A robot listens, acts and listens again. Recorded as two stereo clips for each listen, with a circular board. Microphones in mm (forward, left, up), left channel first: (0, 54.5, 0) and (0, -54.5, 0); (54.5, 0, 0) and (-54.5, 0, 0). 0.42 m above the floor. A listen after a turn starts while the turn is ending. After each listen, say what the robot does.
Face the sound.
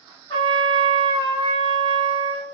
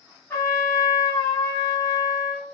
Turn 60° left.
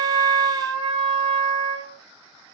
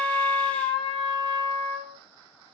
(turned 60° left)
Turn 10° left.
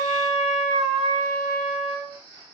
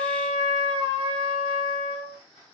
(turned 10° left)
Facing the trumpet.